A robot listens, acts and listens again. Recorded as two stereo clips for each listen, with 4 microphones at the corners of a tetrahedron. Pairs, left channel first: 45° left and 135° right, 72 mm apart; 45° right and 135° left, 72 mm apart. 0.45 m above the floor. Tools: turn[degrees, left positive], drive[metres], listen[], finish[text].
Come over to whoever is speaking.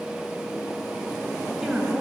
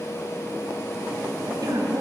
Thought: The woman speaking: 145° left.
Action: turn[145]
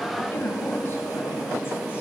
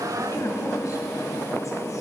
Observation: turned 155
Thought: The woman speaking is now 10° right.
Action: turn[-10]
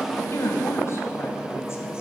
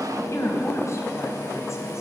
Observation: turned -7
Action: drive[1.0]
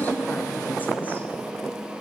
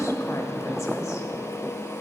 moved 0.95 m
Action: listen[]
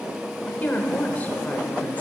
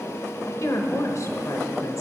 Thought: The woman speaking is now 15° right.
Action: turn[-15]
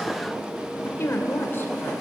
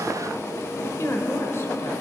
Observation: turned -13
Action: drive[1.0]
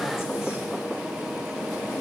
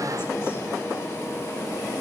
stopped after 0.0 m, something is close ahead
Action: listen[]
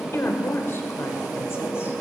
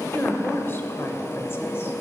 Action: finish[I am next to the woman speaking.]